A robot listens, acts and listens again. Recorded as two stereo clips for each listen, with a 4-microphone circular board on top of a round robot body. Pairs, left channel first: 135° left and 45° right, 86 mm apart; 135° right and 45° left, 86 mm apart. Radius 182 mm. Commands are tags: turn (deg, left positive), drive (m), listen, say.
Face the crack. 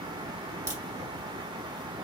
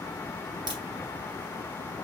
<turn deg="10"/>
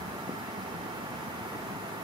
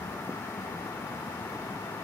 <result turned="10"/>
<say>Facing where the crack came from. I can't hear it now.</say>